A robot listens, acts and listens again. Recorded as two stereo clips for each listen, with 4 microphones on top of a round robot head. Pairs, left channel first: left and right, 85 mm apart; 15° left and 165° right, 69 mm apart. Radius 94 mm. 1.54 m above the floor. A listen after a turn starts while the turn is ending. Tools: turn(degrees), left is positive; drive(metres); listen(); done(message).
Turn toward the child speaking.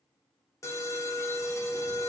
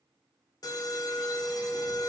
listen()
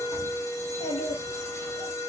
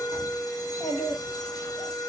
turn(degrees=70)
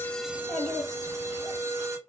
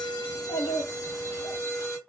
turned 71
done("Facing the child speaking, 2 to 4 m away.")